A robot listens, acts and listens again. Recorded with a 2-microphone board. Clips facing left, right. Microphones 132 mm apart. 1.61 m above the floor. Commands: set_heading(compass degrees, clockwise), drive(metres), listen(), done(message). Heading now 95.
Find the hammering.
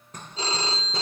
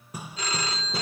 set_heading(125)
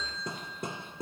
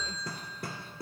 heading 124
set_heading(99)
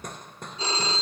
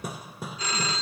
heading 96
done("Facing the hammering.")